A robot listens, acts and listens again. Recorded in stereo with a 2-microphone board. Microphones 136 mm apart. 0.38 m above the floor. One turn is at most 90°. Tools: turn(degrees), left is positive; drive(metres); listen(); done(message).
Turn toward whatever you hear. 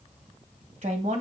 turn(degrees=-65)
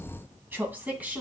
turn(degrees=-10)
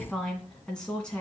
turn(degrees=10)
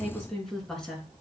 done("Found it: a woman speaking, straight ahead, 2 to 4 m away.")